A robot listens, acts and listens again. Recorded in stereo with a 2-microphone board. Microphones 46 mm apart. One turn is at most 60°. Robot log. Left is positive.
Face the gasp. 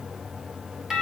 cmd idle
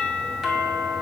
cmd idle
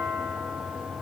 end: I can't make out a gasp, only a doorbell.